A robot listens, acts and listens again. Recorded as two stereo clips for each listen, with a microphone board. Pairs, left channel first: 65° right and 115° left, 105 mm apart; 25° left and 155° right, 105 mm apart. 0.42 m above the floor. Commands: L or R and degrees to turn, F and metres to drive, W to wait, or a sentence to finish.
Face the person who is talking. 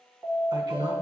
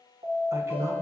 L150
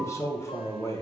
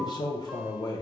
R10
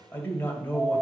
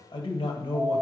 Facing the man speaking, 1 to 2 m away.